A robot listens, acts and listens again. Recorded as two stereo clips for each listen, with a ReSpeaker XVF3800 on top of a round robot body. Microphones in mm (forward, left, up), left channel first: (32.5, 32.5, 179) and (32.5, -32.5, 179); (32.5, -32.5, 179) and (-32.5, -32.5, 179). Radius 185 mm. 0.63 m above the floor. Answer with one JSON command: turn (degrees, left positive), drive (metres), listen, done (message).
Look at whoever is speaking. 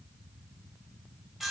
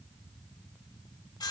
{"listen": true}
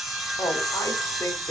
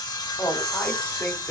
{"turn": 55}
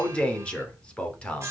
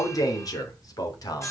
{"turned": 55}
{"turn": 15}
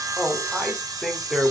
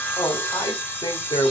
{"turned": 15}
{"done": "Found it: a man speaking, straight ahead, 2 to 4 m away."}